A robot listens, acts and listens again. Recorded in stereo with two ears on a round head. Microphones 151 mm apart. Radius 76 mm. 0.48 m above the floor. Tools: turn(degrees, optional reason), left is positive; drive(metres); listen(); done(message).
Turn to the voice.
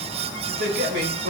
turn(degrees=-65, reason="The man speaking: about 65° right or 115° right.")
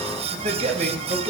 turn(degrees=-50, reason="So it is at 50° right.")
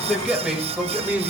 turn(degrees=-10, reason="The man speaking is now 10° right.")
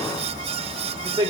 turn(degrees=-25, reason="The man speaking is now 25° right.")
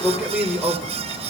turn(degrees=-10, reason="The man speaking is now 10° right.")
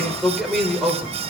done("Found it: a man speaking, straight ahead.")